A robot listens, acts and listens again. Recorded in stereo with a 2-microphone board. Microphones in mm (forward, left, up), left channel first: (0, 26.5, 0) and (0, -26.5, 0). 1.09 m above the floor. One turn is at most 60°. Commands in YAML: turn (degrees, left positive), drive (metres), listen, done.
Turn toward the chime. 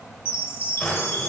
turn: 55
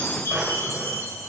turn: 60
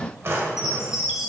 turn: -10
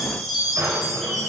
done: "Facing the chime, 1 to 2 m away."